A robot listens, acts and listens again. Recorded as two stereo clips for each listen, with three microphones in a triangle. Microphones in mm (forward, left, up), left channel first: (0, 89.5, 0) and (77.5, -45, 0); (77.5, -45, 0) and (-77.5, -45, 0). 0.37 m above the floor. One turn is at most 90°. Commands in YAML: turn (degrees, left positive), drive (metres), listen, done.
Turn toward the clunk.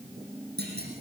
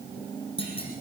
turn: -55
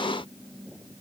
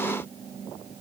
done: "I heard a clunk from this way, but can't make it out now."